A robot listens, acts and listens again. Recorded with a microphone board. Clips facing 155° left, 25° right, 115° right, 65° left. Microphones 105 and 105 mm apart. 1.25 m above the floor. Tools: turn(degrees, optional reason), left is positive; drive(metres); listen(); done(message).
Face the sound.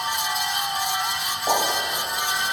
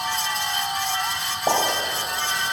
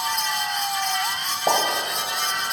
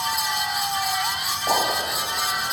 turn(degrees=-70, reason="The pop: 70° right.")
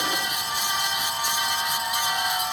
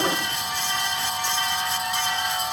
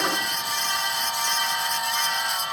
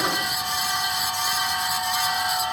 done("I heard a pop from this way, but can't make it out now.")